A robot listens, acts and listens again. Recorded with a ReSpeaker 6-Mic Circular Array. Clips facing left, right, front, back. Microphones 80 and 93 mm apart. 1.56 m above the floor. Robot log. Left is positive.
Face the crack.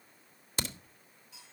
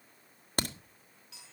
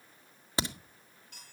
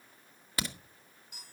note: The crack: 60° right.
cmd yaw -60
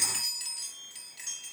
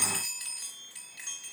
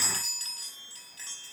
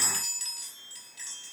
end: I heard a crack from this way, but can't make it out now.